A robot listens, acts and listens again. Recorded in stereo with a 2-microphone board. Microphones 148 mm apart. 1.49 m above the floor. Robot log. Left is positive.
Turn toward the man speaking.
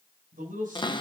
note: The man speaking: about 65° right or 115° right.
cmd yaw -65
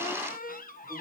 cmd idle
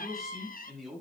end: Facing the man speaking, over 4 m away.